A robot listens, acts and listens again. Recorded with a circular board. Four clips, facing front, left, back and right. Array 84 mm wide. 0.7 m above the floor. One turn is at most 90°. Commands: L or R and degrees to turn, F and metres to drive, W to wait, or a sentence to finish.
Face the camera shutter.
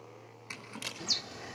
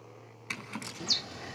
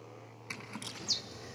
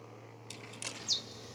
R20
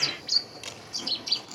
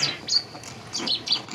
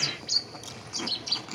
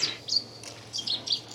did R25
W
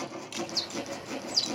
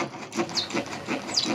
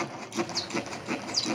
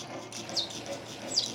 W
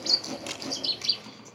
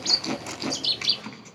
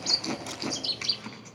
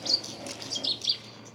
Facing where the camera shutter came from. I can't hear it now.